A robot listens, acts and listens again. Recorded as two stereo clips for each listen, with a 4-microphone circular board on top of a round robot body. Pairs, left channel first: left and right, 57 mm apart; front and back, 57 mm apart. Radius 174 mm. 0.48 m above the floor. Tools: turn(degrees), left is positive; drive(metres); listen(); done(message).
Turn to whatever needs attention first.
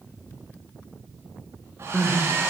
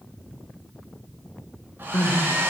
turn(degrees=25)
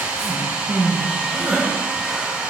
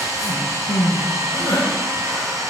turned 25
done("Facing the crying.")